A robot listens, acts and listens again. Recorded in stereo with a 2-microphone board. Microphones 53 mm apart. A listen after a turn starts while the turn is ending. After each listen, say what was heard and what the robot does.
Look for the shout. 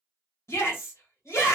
The shout: about 65° left or 115° left. Turn 65° left.
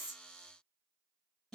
Keep listening.
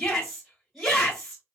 So it is at 10° left. Turn 10° left.
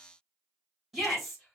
Facing the shout, 1 to 2 m away.